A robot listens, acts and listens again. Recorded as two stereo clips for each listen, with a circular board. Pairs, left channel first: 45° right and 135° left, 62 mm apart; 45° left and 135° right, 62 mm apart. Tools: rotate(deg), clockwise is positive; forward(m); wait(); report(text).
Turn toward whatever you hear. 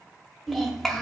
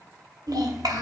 rotate(130)
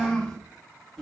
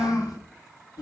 rotate(-35)
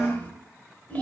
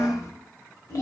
rotate(-25)
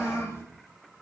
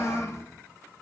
report("Found it: a child speaking, straight ahead.")